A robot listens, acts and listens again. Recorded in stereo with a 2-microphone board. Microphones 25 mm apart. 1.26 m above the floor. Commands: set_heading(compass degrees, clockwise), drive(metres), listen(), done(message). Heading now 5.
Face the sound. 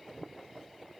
listen()
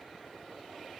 listen()
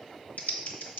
set_heading(290)
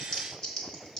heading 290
set_heading(260)
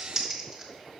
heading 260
set_heading(275)
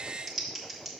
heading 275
done("Facing the typing on a keyboard.")